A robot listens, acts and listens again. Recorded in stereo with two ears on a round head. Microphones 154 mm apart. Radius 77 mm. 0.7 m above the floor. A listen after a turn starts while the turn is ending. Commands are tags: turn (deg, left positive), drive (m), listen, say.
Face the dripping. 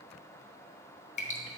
<turn deg="40"/>
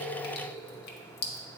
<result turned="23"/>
<turn deg="110"/>
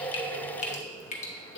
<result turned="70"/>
<turn deg="45"/>
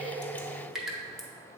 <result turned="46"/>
<say>Facing the dripping, under 1 m away.</say>